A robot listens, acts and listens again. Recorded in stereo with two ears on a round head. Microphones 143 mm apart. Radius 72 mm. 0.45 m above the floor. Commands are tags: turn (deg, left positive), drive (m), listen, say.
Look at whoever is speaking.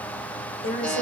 <turn deg="50"/>
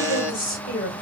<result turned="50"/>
<turn deg="70"/>
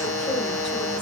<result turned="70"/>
<listen/>
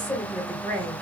<say>Found it: a woman speaking, straight ahead.</say>